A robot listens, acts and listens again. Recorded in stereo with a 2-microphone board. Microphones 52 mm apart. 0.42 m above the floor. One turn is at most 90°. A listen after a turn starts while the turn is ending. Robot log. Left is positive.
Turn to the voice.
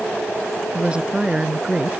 note: The woman speaking: about 20° right or 160° right.
cmd yaw -20
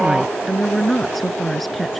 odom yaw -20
end: Facing the woman speaking.